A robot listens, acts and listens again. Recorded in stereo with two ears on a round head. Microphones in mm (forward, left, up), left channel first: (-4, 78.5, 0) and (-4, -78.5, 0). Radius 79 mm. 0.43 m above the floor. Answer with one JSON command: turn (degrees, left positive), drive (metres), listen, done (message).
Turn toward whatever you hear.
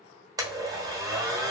{"turn": -20}
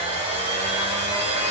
{"turn": -140}
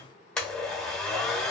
{"done": "Facing the blender."}